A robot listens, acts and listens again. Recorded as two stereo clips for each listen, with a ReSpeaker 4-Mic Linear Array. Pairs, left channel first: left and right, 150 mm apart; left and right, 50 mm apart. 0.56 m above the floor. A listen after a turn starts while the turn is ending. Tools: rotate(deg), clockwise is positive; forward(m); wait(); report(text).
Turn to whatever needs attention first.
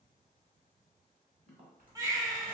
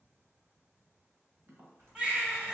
rotate(20)
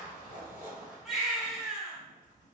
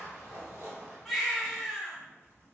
report("Found it: a baby crying, straight ahead, under 1 m away.")